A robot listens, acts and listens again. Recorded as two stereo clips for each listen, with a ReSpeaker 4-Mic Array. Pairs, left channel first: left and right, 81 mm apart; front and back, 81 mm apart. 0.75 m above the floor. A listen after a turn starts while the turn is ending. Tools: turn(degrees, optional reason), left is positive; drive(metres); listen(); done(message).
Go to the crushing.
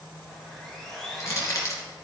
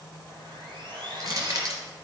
turn(degrees=140, reason="The crushing: 140° left.")
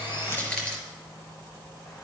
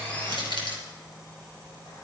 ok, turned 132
turn(degrees=10, reason="The crushing is now 10° left.")
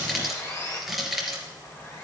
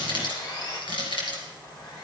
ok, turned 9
drive(metres=1.0)
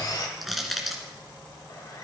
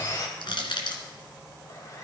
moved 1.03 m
drive(metres=1.0)
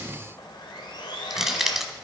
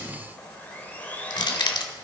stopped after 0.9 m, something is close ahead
done("Arrived at the crushing, straight ahead.")